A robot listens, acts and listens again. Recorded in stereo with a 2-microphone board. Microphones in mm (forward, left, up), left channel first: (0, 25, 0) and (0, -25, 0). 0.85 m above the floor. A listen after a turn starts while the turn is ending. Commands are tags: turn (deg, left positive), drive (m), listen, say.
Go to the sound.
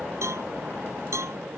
<turn deg="-90"/>
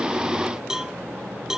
<turn deg="-10"/>
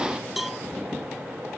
<drive m="1.0"/>
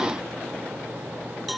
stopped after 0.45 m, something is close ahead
<say>Blocked. The cowbell is further on, straight ahead.</say>